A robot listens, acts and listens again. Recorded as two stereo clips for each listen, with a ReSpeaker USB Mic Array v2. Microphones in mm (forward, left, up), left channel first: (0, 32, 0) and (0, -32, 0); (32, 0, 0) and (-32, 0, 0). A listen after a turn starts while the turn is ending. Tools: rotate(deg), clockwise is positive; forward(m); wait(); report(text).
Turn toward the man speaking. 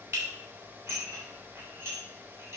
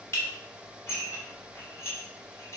wait()
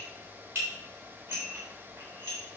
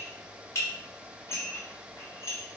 wait()
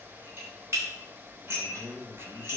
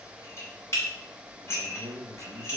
rotate(140)
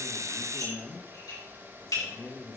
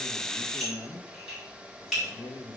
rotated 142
report("Facing the man speaking.")